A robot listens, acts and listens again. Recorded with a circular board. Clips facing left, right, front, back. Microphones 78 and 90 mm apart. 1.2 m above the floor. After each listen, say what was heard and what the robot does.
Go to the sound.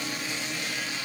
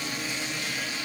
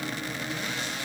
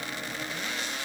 Keep listening.
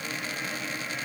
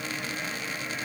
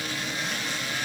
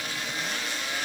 Keep listening.
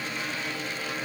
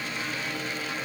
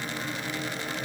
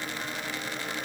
I can't make out anything to turn to.